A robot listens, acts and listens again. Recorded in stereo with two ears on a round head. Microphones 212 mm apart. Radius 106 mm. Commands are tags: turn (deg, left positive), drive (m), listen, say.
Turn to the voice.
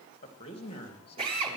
<turn deg="25"/>
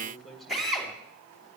<say>Found it: a man speaking, straight ahead.</say>